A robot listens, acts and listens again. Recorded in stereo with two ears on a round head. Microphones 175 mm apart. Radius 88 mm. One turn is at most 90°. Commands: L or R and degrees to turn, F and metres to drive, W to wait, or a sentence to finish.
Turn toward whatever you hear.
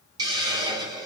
R20
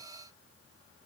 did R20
W
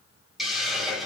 Found it: a hiss, straight ahead.